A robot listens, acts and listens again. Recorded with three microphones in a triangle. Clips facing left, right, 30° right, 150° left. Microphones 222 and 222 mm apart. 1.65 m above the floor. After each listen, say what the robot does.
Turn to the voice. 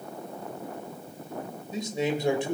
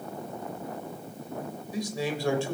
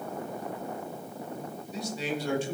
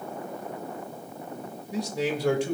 Turn 160° left.
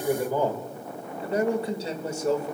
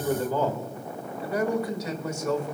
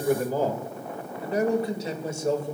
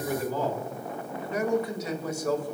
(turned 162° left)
Turn 35° left.
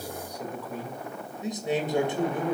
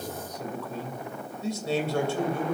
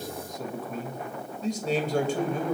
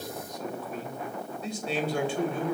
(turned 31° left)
Turn 20° left.
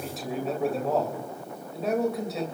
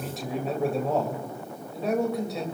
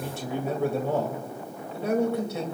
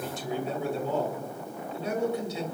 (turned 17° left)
Facing the man speaking.